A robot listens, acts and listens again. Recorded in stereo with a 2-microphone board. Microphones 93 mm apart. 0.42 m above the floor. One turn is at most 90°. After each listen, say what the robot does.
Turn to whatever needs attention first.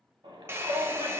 Turn 70° right.
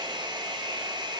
Keep listening.
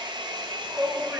Turn 25° right.
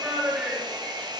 Turn 15° right.
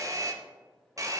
Keep listening.
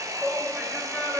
Facing the shout, 2 to 4 m away.